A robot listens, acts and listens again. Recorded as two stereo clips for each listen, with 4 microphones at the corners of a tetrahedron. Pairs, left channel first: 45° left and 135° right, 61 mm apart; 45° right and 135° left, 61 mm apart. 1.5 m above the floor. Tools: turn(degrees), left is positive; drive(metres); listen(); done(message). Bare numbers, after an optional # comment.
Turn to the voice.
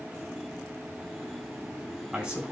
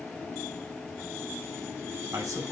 # The man speaking: 155° left.
turn(155)
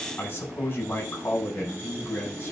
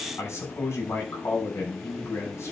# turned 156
done("Found it: a man speaking, straight ahead, over 4 m away.")